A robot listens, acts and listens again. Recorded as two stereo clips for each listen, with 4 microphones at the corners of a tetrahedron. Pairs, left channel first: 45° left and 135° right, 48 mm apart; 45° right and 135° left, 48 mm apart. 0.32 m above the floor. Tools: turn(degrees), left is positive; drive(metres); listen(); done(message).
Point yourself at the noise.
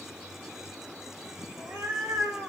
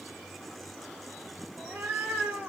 turn(degrees=-175)
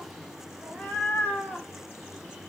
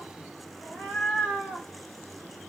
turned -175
turn(degrees=10)
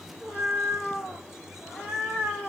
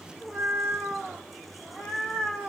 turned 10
done("Found it: a cat meowing, straight ahead.")